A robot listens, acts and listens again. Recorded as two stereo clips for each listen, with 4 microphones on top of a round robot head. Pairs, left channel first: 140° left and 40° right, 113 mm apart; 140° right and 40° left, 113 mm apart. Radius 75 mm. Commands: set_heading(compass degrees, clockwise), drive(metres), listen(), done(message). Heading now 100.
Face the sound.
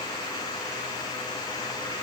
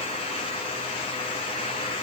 listen()
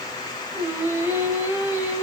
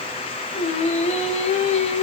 set_heading(210)
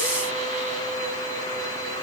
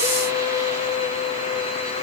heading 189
set_heading(214)
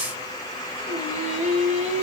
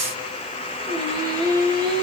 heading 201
set_heading(216)
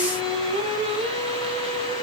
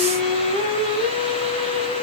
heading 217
done("Found it: singing, straight ahead.")